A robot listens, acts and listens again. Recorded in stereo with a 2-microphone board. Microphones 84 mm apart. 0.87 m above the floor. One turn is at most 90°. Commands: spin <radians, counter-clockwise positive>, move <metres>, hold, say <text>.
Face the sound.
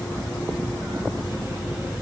hold
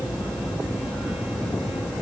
hold
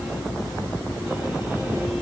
say I can't make out anything.